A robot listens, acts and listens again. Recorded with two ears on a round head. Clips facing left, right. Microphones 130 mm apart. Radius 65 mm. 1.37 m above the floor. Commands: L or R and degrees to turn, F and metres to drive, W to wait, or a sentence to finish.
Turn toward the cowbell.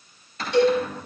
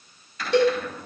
R60
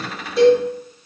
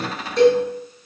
Facing the cowbell, over 4 m away.